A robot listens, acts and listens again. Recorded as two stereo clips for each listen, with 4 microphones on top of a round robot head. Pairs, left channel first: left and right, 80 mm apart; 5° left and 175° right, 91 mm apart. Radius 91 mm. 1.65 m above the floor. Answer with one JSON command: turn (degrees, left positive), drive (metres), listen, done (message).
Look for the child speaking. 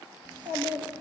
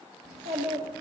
{"turn": -160}
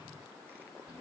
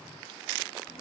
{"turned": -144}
{"turn": -15}
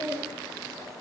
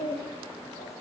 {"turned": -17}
{"done": "Found it: a child speaking, straight ahead, 1 to 2 m away."}